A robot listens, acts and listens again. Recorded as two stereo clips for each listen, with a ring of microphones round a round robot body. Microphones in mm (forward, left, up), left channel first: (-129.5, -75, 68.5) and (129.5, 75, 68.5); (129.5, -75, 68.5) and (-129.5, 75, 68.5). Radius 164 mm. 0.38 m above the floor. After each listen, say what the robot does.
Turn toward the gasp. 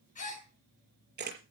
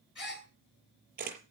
Turn 85° right.
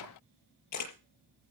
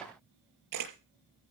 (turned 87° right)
I heard a gasp from this way, but can't make it out now.